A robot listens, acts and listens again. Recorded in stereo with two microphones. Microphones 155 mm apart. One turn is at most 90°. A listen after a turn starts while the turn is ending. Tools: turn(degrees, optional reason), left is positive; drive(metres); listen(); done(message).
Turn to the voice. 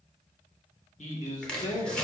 turn(degrees=50, reason="The man speaking: about 50° left or 130° left.")
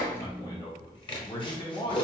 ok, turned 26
turn(degrees=35, reason="So it is at 35° left.")
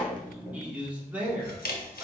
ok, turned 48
turn(degrees=-10, reason="The man speaking is now 10° right.")
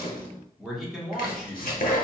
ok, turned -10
done("Found it: a man speaking, straight ahead, 1 to 2 m away.")